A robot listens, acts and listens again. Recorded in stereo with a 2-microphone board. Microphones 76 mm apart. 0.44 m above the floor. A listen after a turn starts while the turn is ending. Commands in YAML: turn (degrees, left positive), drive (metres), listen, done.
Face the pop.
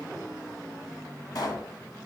turn: 55
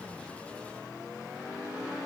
listen: true
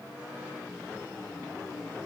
done: "I heard a pop, but can't make it out now. It was about straight ahead or 70° left."